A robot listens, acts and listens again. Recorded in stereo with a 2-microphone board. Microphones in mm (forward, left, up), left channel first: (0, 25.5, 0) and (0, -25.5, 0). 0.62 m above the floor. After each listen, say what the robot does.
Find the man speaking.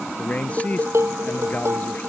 Turn 30° left.
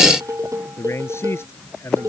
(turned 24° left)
Turn 125° left.
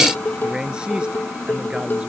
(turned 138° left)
Turn 20° right.
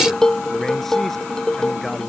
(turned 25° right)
Keep listening.
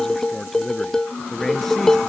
Found it: a man speaking, straight ahead.